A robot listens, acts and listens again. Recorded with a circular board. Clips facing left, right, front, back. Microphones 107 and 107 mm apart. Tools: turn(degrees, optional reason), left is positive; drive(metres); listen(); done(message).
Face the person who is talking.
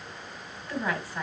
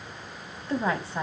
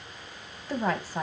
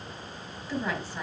turn(degrees=-35, reason="The woman speaking: 35° right.")
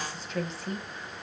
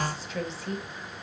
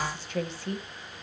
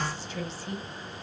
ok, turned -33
done("Found it: a woman speaking, straight ahead.")